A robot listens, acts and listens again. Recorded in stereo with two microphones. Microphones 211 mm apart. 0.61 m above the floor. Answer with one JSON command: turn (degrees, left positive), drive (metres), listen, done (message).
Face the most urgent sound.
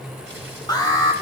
{"turn": 20}
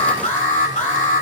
{"turn": 140}
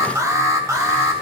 {"turn": -15}
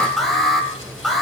{"done": "Facing the alarm."}